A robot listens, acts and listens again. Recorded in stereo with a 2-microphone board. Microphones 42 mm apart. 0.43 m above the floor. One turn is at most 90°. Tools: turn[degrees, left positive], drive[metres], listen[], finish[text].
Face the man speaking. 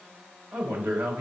Thought: The man speaking: about 60° right or 120° right.
Action: turn[-60]
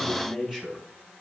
Thought: So it is at 10° right.
Action: turn[-10]
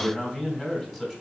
Action: finish[Found it: a man speaking, straight ahead, 2 to 4 m away.]